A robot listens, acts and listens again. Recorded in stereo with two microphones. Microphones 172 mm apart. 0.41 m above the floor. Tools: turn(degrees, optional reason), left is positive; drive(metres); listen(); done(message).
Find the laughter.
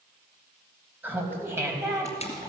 turn(degrees=-20, reason="The laughter: about 20° right or 160° right.")
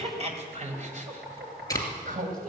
turn(degrees=-125, reason="So it is at 125° right.")
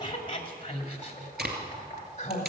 turn(degrees=40, reason="The laughter is now 40° left.")
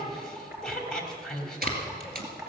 done("Found it: laughter, straight ahead.")